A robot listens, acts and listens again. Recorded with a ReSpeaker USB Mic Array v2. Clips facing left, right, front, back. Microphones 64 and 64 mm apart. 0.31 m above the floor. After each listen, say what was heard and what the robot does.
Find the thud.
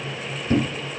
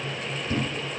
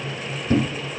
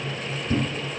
The thud: 40° left. Turn 40° left.
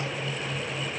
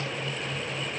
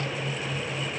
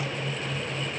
Facing where the thud came from. I can't hear it now.